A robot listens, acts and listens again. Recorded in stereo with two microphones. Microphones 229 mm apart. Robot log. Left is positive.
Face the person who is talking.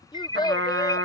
note: The child speaking: about 20° left or 160° left.
cmd yaw +20
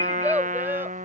note: So it is at 10° right.
cmd yaw -10
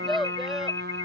end: Found it: a child speaking, straight ahead.